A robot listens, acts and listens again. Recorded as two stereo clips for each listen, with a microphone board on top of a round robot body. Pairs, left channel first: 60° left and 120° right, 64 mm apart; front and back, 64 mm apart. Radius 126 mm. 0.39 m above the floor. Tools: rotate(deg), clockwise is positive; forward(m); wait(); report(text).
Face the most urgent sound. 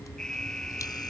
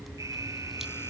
rotate(-140)
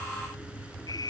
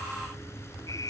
rotate(-40)
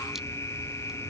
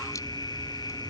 rotate(-10)
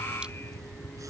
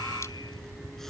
wait()
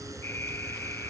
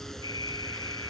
report("Facing the alarm.")